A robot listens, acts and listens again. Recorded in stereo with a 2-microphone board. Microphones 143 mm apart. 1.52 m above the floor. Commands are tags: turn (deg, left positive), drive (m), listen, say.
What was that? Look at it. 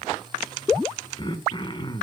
<turn deg="35"/>
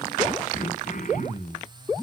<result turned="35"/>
<turn deg="115"/>
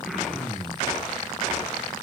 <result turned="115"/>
<say>Facing the throat clearing.</say>